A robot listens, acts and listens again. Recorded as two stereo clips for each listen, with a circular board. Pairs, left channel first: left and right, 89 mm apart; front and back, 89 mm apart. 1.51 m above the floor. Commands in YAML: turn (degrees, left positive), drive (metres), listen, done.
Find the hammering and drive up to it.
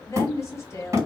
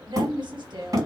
turn: -140
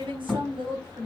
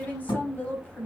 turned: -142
drive: 1.0
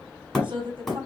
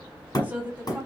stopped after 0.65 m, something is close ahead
done: "I am next to the hammering."